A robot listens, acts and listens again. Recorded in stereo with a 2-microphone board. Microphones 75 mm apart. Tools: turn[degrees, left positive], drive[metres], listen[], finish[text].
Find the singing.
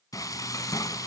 Action: listen[]
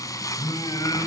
Thought: The singing: about 60° left or 120° left.
Action: turn[60]
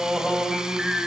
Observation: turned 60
Thought: So it is at 10° right.
Action: turn[-10]
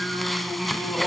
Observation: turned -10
Thought: The singing is now 10° right.
Action: turn[-10]
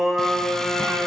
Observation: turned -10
Thought: The singing is now 10° right.
Action: turn[-10]
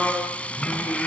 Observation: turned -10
Action: finish[Facing the singing.]